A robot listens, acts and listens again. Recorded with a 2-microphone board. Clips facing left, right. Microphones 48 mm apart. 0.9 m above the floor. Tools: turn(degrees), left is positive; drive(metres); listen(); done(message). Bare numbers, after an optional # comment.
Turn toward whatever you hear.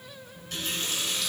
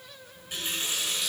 # The running tap: about 15° right or 165° right.
turn(-15)
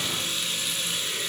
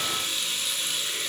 done("Found it: a running tap, straight ahead, 2 to 4 m away.")